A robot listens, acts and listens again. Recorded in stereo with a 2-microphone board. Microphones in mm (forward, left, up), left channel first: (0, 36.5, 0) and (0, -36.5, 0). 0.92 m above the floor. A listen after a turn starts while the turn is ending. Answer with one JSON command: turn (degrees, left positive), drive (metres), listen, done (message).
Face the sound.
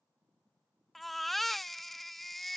{"turn": 30}
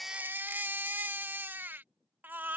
{"turn": -25}
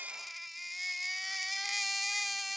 {"done": "Facing the baby crying."}